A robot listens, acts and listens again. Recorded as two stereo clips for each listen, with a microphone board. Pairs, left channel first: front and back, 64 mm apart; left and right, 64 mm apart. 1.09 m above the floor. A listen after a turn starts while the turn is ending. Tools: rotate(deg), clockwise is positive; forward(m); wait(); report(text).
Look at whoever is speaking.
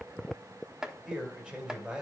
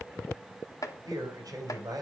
rotate(105)
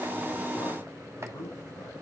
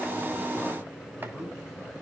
wait()
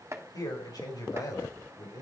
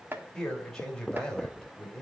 rotate(-10)
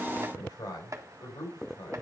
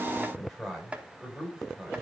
report("Facing the man speaking.")